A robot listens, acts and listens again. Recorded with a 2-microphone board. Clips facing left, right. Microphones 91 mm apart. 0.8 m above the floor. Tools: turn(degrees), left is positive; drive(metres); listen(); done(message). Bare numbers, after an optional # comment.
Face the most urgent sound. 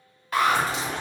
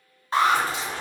# The alarm: about 30° right or 150° right.
turn(-30)
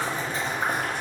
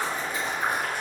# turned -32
listen()
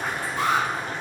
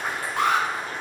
# So it is at 120° right.
turn(-120)
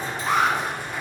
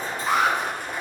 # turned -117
done("Facing the alarm, under 1 m away.")